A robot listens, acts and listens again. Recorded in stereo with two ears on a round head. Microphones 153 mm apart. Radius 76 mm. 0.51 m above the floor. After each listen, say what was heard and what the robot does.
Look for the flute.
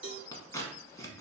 Keep listening.
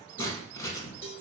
Keep listening.
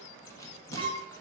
The flute: about 45° right or 135° right. Turn 45° right.
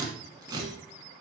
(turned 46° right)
Keep listening.
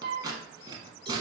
So it is at 80° right. Turn 80° right.
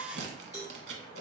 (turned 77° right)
Keep listening.
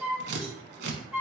Facing the flute.